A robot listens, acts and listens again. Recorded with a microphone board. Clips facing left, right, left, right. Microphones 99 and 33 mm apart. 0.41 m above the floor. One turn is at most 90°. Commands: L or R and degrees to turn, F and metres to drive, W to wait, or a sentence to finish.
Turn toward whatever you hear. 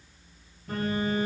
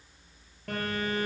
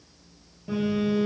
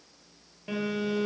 R70
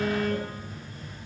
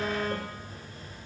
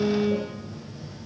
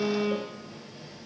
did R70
R40
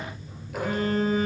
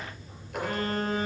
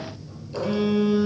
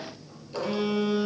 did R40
Found it: a phone buzzing, straight ahead.